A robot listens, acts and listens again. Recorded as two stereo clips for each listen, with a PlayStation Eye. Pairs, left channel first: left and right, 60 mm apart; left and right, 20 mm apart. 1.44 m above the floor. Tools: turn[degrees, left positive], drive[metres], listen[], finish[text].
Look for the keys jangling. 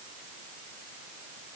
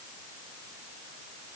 Action: listen[]
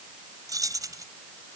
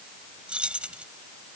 Action: turn[-90]
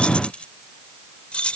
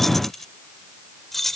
Thought: So it is at 20° left.
Action: turn[20]
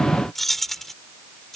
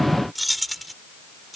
Action: finish[Found it: keys jangling, straight ahead.]